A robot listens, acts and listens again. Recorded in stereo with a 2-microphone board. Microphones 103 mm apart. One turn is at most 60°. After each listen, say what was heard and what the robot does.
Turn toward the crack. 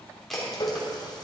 Turn 30° left.
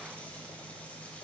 Keep listening.
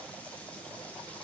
I heard a crack, but can't make it out now. It was about 25° right or 145° left.